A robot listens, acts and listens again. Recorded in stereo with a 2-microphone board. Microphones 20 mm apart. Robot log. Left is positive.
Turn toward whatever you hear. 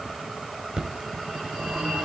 note: The phone ringing: about 65° right or 115° right.
cmd yaw -65
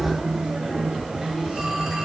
note: So it is at 45° right.
cmd yaw -45
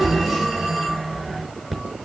note: The phone ringing is now 10° right.
cmd yaw -10
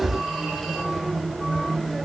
end: Found it: a phone ringing, straight ahead, over 4 m away.